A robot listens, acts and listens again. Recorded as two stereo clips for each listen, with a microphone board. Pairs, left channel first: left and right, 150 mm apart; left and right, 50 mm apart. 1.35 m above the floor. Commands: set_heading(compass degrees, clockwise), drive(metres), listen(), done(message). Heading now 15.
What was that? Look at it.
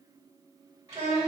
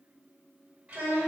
set_heading(35)
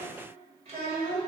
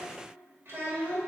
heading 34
set_heading(174)
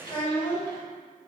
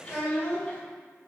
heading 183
set_heading(173)
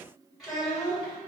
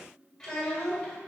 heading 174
done("Found it: a child speaking, straight ahead, 2 to 4 m away.")